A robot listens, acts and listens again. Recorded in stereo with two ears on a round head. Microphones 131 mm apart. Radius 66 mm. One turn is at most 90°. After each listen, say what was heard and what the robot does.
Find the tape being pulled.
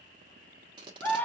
The tape being pulled: about 30° right or 150° right. Turn 30° right.
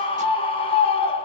Keep listening.
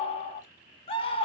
Keep listening.
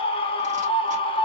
I heard tape being pulled, but can't make it out now. It was about straight ahead or 120° right.